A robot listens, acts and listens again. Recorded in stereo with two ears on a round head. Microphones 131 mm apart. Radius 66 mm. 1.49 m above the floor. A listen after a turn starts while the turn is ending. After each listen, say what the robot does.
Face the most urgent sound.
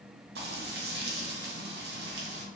Keep listening.
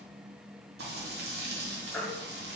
Turn 30° left.
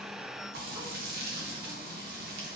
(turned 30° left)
Keep listening.
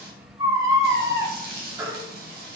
Turn 25° right.
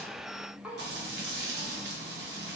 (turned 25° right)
Keep listening.
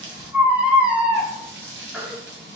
Turn 10° right.
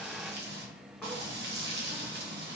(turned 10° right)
Keep listening.
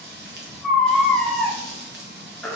Found it: a baby crying, straight ahead.